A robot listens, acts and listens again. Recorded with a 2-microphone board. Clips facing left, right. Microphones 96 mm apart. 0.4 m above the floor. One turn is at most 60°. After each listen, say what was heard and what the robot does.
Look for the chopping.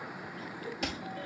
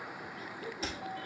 The chopping: about 65° left or 115° left. Turn 60° left.
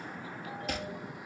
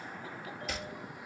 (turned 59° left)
So it is at 55° left. Turn 55° left.
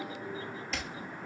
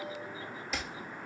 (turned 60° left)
Facing the chopping, 1 to 2 m away.